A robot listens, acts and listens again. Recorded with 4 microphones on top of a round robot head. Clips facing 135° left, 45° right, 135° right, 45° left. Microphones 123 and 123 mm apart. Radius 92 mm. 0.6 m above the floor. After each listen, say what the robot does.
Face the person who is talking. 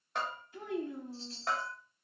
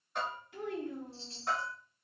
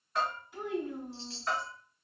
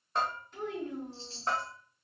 Turn 50° right.
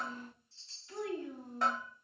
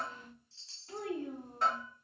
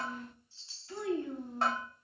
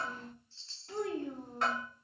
Facing the child speaking, 1 to 2 m away.